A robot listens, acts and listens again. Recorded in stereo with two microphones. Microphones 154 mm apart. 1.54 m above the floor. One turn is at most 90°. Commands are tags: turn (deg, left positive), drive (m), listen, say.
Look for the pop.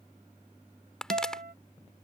<turn deg="30"/>
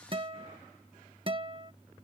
<listen/>
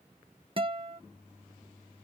<say>I heard a pop, but can't make it out now. It was about 25° right or 145° left.</say>